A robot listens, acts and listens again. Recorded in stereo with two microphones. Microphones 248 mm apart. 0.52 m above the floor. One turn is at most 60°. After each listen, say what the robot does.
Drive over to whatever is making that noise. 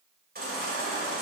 Turn 40° right.
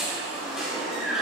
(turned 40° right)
Drive 1.0 m forward.
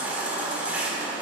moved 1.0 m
Turn 10° right.
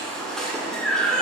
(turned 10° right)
Drive 1.0 m forward.
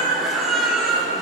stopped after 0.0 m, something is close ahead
Arrived at the baby crying, straight ahead.